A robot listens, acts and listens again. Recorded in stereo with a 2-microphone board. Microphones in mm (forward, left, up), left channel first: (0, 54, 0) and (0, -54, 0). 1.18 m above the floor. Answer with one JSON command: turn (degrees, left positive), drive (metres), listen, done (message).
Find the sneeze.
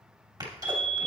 {"turn": -40}
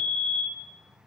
{"listen": true}
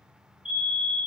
{"done": "I heard a sneeze, but can't make it out now. It was about straight ahead or 100° right."}